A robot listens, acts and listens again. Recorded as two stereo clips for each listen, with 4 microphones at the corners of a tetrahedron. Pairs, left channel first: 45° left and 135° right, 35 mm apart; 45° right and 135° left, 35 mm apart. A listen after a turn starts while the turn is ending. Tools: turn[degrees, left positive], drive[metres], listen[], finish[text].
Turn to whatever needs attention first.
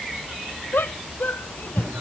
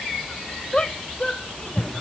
Thought: The shout: 20° left.
Action: turn[20]
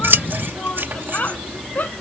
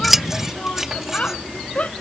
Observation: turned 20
Action: finish[Found it: a shout, straight ahead.]